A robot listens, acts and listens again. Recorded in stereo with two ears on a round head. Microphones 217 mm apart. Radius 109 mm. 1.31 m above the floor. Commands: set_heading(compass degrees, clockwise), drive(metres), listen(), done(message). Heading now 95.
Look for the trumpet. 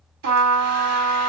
set_heading(185)
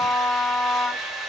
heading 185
set_heading(175)
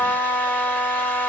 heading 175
done("Found it: a trumpet, straight ahead, 2 to 4 m away.")